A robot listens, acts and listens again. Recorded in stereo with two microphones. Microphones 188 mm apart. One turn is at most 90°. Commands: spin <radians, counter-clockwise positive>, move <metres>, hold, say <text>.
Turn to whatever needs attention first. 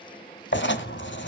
hold
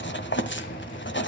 hold
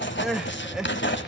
spin 0.52
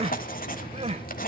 spin -0.52
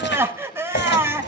spin -0.26
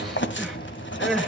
say Facing the crying, 1 to 2 m away.